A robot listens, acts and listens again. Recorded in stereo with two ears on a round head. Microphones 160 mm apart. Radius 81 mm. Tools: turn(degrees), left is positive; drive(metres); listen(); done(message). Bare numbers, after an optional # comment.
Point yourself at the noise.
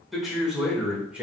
turn(-30)
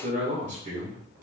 # So it is at 130° right.
turn(-130)
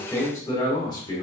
# The man speaking is now 25° left.
turn(25)
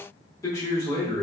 # The man speaking is now 25° left.
turn(25)
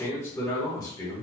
# The man speaking is now 20° left.
turn(20)
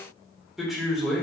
done("Facing the man speaking, 1 to 2 m away.")